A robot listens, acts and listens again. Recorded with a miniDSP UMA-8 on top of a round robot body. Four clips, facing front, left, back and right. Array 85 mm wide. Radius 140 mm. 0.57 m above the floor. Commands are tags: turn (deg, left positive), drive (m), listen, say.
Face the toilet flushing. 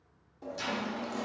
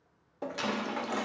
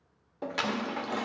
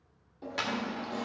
<turn deg="130"/>
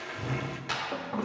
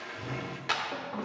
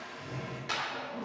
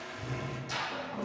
<turn deg="15"/>
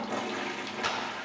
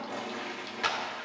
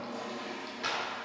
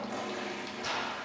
<say>Found it: a toilet flushing, straight ahead.</say>